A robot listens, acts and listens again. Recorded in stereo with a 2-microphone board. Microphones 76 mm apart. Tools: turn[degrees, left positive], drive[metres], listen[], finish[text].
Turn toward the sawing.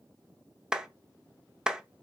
Action: listen[]
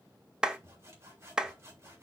Thought: The sawing: about 35° right or 145° right.
Action: turn[-35]
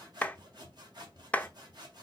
Thought: So it is at 110° right.
Action: turn[-110]
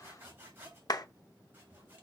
Thought: The sawing is now 25° right.
Action: turn[-25]
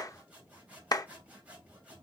Thought: The sawing is now 20° right.
Action: turn[-20]
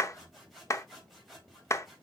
Action: finish[Found it: sawing, straight ahead, 2 to 4 m away.]